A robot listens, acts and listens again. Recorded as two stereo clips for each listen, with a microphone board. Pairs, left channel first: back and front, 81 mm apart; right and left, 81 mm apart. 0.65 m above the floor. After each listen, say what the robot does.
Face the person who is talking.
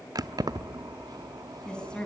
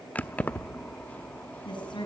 Turn 100° right.
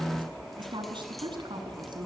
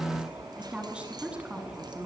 Turn 15° left.
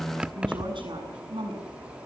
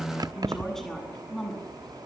Found it: a woman speaking, straight ahead.